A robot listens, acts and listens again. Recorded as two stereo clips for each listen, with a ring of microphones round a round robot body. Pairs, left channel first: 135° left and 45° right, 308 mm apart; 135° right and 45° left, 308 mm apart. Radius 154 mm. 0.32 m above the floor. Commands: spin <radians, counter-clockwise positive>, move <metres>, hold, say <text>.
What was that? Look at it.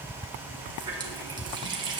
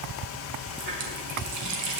spin 0.52
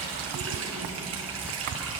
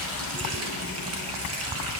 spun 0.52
say Facing the running tap.